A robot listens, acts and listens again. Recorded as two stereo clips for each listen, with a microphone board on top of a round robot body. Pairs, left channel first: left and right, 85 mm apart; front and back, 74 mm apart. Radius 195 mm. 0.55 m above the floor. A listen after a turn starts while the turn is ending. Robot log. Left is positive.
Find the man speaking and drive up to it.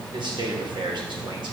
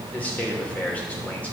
note: The man speaking: 70° right.
cmd yaw -70
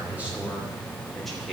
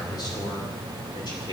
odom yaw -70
cmd idle
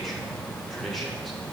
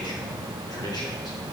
cmd idle
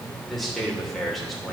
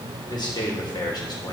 cmd fwd 1.0
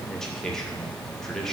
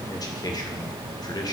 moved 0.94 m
cmd fwd 1.0
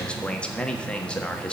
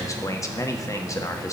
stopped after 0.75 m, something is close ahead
note: The man speaking is now 15° left.
cmd yaw +15
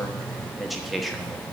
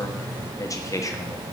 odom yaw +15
end: Arrived at the man speaking, straight ahead.